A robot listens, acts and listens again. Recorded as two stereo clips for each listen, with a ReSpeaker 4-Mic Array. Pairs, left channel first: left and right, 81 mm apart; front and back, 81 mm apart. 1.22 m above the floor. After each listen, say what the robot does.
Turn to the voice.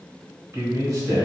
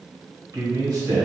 Turn 140° right.
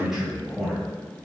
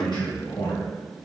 Facing the man speaking.